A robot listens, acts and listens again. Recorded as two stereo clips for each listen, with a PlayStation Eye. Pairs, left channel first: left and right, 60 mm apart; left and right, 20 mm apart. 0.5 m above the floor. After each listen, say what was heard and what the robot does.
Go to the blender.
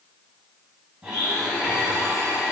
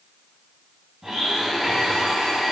Turn 30° right.
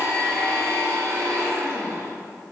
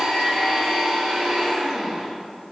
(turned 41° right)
So it is at 125° right. Turn 125° right.
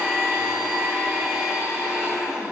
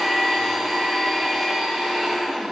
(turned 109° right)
The blender is now 15° right. Turn 15° right.
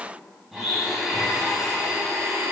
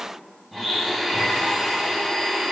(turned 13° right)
Drive 1.0 m forward.
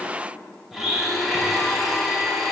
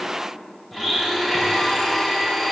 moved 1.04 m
Drive 1.0 m forward.
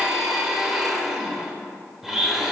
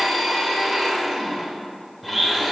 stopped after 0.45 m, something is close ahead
The blender is now 10° right. Turn 10° right.
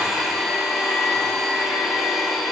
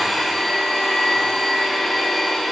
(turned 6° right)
Arrived at the blender, straight ahead.